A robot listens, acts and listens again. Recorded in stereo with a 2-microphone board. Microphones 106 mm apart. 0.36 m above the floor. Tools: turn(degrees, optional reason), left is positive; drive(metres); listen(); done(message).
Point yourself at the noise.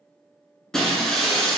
turn(degrees=30)
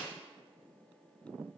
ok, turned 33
listen()
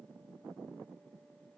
done("I heard breaking glass, but can't make it out now. It was about 30° right or 140° left.")